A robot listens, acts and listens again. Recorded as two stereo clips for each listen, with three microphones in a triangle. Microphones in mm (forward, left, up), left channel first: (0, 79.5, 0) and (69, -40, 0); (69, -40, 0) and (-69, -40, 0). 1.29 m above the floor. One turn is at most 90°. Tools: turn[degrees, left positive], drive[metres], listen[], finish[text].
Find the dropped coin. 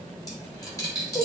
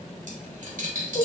Thought: The dropped coin: straight behind.
Action: turn[90]
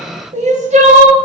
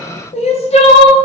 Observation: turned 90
Thought: Nothing new. It was at 90° left.
Action: turn[90]
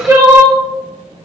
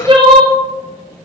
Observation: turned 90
Action: finish[I heard a dropped coin from this way, but can't make it out now.]